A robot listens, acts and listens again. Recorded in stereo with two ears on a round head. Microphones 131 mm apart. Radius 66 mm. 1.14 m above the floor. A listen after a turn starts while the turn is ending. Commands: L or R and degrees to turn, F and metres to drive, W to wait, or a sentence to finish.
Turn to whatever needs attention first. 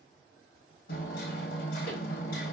W
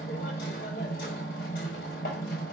W
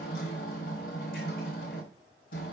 I can't make out anything urgent, only hammering.